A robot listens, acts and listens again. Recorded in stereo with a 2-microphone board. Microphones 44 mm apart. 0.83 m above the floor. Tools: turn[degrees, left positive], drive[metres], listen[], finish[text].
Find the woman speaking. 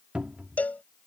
Action: listen[]
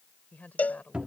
Thought: The woman speaking: about 40° left or 140° left.
Action: turn[40]
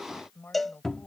Thought: So it is at 110° left.
Action: turn[110]
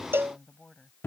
Thought: The woman speaking is now 20° left.
Action: turn[20]
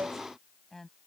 Thought: The woman speaking is now 10° left.
Action: turn[10]
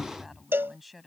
Action: finish[Facing the woman speaking.]